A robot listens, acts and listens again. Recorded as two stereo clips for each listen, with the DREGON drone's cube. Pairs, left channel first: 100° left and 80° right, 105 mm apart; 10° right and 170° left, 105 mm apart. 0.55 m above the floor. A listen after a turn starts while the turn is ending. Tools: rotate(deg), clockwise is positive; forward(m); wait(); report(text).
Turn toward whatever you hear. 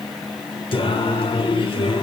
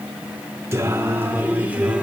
rotate(-90)
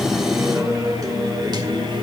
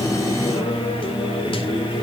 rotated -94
rotate(40)
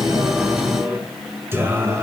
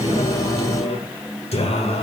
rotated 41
rotate(15)
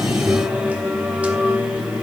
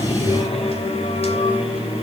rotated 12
report("Facing the singing, 2 to 4 m away.")